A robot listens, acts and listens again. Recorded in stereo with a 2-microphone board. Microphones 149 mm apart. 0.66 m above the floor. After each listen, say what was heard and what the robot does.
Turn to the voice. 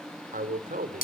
The man speaking: about 70° right or 110° right. Turn 70° right.
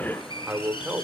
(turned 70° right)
So it is at 10° right. Turn 10° right.
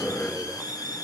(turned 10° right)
Keep listening.
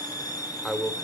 Found it: a man speaking, straight ahead.